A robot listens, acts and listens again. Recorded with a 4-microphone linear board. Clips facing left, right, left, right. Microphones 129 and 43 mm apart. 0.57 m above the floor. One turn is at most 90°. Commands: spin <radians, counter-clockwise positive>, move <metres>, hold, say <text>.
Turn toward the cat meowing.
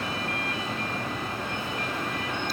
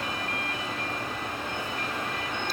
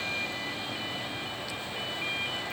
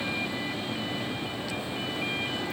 hold
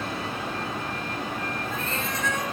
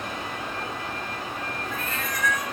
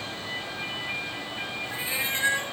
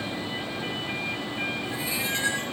spin 0.44
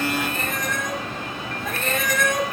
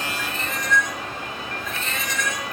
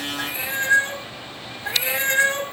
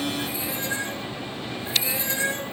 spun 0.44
spin 1.57
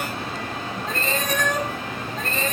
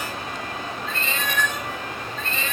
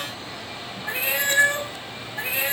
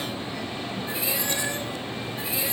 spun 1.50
spin 0.70
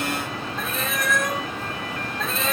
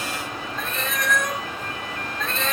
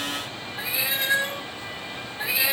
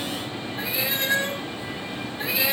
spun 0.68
say Found it: a cat meowing, straight ahead.